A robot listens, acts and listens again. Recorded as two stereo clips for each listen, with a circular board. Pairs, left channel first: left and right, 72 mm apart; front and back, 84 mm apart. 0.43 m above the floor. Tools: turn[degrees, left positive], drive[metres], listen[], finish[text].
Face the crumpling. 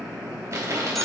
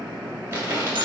Thought: The crumpling: 120° right.
Action: turn[-120]
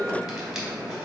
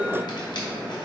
Action: listen[]
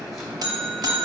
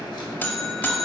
Action: listen[]
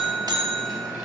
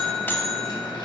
Action: finish[Facing where the crumpling came from. I can't hear it now.]